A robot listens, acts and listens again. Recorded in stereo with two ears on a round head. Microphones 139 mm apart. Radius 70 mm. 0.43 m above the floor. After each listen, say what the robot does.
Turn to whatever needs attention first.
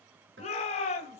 Turn 45° left.
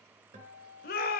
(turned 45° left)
Turn 85° left.
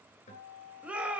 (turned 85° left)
Turn 10° right.
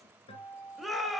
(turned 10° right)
Facing the shout.